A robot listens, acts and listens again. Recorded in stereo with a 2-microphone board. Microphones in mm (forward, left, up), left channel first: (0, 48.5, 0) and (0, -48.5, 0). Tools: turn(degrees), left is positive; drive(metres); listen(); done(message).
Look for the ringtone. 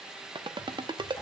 turn(degrees=-55)
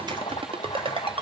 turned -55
turn(degrees=-70)
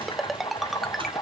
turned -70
done("Found it: a ringtone, straight ahead, under 1 m away.")